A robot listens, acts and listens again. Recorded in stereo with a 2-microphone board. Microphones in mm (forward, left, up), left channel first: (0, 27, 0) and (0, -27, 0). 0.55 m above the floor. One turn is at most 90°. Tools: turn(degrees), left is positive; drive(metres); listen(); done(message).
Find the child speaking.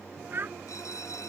turn(degrees=-40)
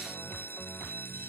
listen()
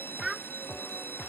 done("Facing the child speaking.")